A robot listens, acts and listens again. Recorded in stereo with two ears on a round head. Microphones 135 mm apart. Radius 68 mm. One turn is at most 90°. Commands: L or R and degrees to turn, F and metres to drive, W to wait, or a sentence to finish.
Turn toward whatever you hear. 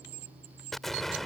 L30
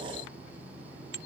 W
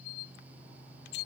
I heard an explosion, but can't make it out now. It was about 30° right or 150° left.